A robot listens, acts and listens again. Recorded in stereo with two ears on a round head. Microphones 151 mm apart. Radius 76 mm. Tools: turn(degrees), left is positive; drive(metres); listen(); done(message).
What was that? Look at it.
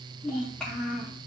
turn(degrees=30)
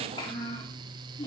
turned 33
turn(degrees=150)
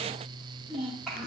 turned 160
done("Facing the child speaking, 2 to 4 m away.")